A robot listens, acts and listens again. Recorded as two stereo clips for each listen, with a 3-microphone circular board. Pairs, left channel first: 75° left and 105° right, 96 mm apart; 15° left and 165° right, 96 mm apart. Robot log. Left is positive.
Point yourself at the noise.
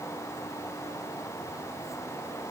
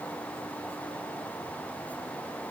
cmd idle
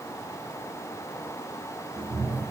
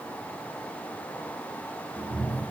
note: The cat meowing: 90° right.
cmd yaw -90
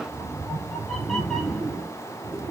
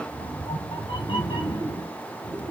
note: The cat meowing is now 15° right.
cmd yaw -15
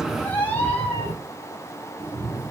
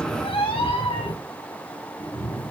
end: Found it: a cat meowing, straight ahead, 2 to 4 m away.